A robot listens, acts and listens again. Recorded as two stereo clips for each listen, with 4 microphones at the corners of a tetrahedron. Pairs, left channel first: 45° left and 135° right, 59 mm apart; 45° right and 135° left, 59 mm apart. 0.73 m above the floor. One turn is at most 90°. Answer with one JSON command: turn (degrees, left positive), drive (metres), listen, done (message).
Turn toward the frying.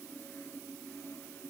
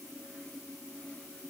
{"listen": true}
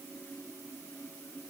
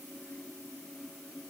{"listen": true}
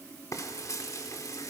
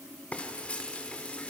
{"turn": 25}
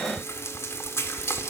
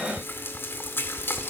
{"done": "Facing the frying, 1 to 2 m away."}